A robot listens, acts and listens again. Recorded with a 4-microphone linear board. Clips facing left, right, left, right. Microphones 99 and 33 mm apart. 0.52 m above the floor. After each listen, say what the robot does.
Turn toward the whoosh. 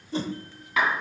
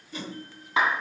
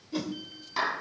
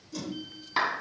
Turn 30° left.
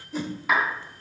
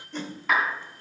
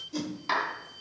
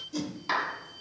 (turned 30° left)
Found it: a whoosh, straight ahead, 1 to 2 m away.